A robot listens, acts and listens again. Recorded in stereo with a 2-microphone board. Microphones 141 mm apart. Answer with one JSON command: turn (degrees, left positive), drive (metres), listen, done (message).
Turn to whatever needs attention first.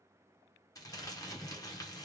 {"listen": true}
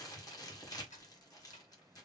{"listen": true}
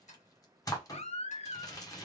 {"turn": 50}
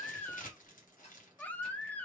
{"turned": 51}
{"turn": 10}
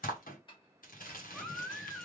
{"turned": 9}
{"done": "Found it: a baby crying, straight ahead."}